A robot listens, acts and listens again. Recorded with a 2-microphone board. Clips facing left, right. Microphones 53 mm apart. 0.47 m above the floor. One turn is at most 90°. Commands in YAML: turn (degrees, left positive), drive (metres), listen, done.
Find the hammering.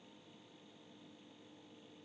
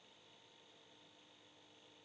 listen: true
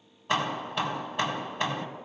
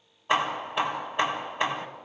turn: -20
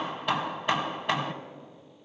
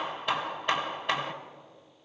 done: "Found it: hammering, straight ahead."